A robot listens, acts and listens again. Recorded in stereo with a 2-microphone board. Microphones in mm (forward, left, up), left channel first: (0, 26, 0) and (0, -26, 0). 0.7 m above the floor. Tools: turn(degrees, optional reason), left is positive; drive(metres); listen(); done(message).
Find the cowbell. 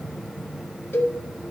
turn(degrees=45, reason="The cowbell: about 45° left or 135° left.")
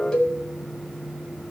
turn(degrees=20, reason="So it is at 20° left.")
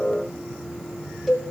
done("Found it: a cowbell, straight ahead.")